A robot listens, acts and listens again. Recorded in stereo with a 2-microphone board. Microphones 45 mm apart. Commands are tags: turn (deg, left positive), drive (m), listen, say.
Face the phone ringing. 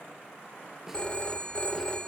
<turn deg="25"/>
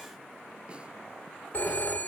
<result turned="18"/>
<turn deg="140"/>
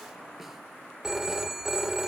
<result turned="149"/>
<turn deg="-10"/>
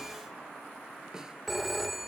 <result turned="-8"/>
<say>Facing the phone ringing.</say>